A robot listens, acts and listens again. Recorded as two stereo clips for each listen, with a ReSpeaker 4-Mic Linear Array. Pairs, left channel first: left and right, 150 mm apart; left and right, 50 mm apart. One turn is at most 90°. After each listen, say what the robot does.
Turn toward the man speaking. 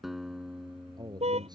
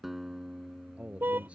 Turn 30° right.
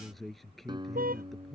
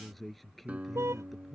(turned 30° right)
Found it: a man speaking, straight ahead.